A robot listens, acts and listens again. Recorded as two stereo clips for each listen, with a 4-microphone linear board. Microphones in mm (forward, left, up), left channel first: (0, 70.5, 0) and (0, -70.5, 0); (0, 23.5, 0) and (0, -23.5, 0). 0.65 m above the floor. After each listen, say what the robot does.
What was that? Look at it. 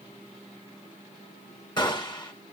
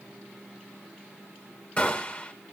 Turn 30° left.
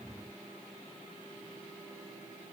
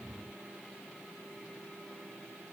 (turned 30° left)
Keep listening.
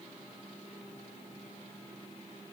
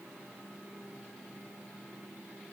I heard a gunshot, but can't make it out now. It was about straight ahead or 120° left.